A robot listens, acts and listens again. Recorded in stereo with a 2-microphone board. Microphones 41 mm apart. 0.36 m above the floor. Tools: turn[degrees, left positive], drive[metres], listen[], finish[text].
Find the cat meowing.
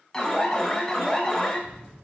Thought: The cat meowing: about 35° right or 145° right.
Action: turn[-35]
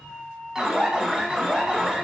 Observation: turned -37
Thought: So it is at 110° right.
Action: turn[-110]
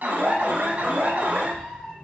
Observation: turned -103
Action: finish[Found it: a cat meowing, straight ahead, 2 to 4 m away.]